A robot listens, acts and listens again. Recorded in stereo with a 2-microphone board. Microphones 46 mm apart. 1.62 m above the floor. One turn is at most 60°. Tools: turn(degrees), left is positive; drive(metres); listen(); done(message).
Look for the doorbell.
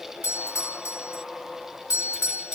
turn(degrees=60)
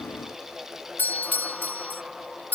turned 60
turn(degrees=40)
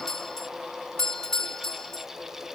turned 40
turn(degrees=10)
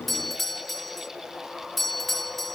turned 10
done("Found it: a doorbell, straight ahead.")